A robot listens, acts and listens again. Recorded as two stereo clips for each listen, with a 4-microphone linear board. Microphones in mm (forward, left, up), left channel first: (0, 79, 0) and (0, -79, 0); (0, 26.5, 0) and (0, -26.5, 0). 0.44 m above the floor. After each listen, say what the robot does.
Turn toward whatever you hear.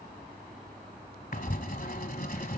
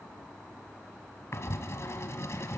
Turn 65° left.
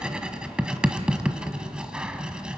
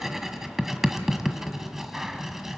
Found it: writing, straight ahead.